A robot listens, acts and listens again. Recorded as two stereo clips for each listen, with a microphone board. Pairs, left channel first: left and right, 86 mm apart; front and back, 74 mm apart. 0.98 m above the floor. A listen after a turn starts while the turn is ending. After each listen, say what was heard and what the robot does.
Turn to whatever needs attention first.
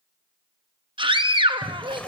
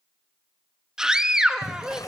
The scream: 100° right. Turn 100° right.
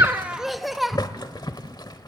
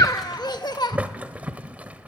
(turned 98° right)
Facing the scream.